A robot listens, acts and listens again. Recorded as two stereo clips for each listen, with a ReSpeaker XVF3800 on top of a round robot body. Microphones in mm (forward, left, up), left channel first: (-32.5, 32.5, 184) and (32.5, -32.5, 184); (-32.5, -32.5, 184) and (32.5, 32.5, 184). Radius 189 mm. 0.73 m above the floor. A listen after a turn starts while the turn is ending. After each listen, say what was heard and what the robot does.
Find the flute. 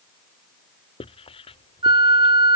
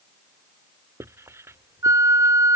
The flute: 10° right. Turn 10° right.
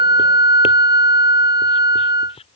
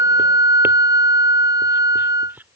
Facing the flute.